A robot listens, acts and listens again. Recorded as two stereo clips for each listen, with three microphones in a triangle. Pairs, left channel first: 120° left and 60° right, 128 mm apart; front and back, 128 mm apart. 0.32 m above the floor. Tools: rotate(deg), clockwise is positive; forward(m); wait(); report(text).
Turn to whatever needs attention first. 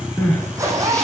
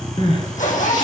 rotate(-40)
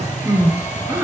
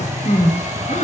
rotate(-10)
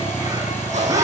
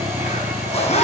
wait()
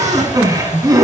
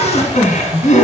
report("Found it: crying, straight ahead.")